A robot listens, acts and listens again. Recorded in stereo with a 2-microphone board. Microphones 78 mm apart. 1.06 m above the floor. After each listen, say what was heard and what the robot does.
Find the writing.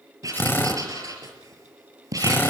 The writing: about 50° right or 130° right. Turn 50° right.
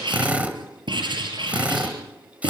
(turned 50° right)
So it is at 85° right. Turn 85° right.
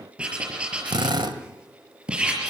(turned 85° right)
The writing is now 15° right. Turn 15° right.
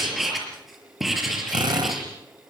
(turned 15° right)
Facing the writing.